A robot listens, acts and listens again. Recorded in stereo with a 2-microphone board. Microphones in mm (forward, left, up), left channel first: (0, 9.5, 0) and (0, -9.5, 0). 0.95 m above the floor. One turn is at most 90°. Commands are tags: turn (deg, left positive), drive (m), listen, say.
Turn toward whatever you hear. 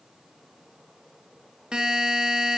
<turn deg="-45"/>
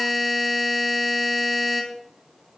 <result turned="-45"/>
<say>Facing the buzzer.</say>